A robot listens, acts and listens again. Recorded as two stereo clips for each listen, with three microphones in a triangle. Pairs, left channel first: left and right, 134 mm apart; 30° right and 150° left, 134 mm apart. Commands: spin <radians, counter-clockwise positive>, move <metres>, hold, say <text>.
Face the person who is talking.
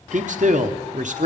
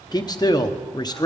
spin -1.48
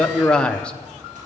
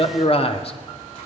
say Facing the man speaking.